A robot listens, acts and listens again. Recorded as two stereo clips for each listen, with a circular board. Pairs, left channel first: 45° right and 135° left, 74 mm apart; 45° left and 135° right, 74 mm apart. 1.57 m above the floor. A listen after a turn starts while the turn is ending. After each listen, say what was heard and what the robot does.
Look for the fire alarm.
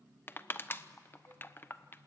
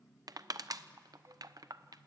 Keep listening.
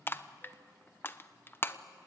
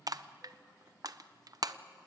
Keep listening.
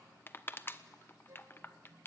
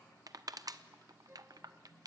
I can't make out a fire alarm, only crushing.